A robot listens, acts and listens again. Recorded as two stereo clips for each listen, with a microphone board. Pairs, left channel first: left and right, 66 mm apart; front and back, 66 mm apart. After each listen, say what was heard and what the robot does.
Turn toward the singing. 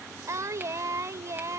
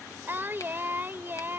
The singing: 125° right. Turn 125° right.
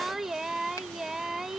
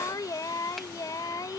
Facing the singing.